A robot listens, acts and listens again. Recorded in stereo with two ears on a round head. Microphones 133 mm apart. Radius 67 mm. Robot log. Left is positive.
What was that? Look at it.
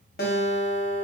note: The guitar: about 65° left or 115° left.
cmd yaw +65
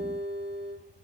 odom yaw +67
note: So it is at 20° left.
cmd yaw +20
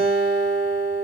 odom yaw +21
end: Found it: a guitar, straight ahead.